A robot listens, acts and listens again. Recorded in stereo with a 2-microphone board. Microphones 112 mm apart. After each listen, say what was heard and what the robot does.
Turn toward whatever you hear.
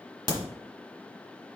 The crack: about 40° right or 140° right. Turn 40° right.
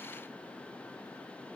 Keep listening.
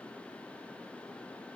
I heard a crack, but can't make it out now. It was about straight ahead or 100° right.